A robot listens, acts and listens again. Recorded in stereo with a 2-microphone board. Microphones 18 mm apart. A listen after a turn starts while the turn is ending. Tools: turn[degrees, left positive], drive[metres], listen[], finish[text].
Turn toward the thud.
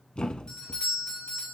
Thought: The thud: about 60° left or 120° left.
Action: turn[60]
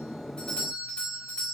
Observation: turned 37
Action: listen[]
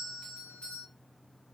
Action: finish[I heard a thud, but can't make it out now. It was about 25° left or 85° left.]